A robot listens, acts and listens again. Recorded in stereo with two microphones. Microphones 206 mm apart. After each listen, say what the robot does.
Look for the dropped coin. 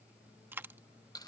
Turn 30° right.
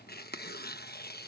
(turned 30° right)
Keep listening.
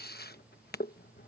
I heard a dropped coin, but can't make it out now. It was about 20° left or 140° right.